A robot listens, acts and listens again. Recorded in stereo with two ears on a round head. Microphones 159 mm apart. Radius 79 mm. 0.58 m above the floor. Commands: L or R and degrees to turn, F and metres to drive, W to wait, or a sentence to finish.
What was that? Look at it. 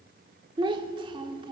R25
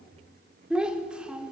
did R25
Found it: a child speaking, straight ahead, 1 to 2 m away.